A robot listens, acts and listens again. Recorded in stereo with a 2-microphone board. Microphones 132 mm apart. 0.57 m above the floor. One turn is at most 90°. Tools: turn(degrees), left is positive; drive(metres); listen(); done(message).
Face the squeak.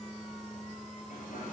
listen()
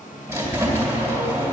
turn(degrees=-25)
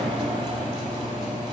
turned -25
turn(degrees=-90)
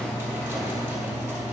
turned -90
turn(degrees=-15)
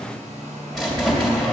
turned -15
done("Found it: a squeak, straight ahead.")